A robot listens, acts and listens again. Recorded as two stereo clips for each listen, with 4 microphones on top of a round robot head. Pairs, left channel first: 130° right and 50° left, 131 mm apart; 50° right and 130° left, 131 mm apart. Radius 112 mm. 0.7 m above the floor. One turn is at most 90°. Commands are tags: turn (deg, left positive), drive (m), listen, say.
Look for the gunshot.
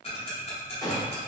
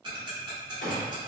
<turn deg="-70"/>
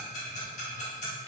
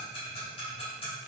<say>I heard a gunshot from this way, but can't make it out now.</say>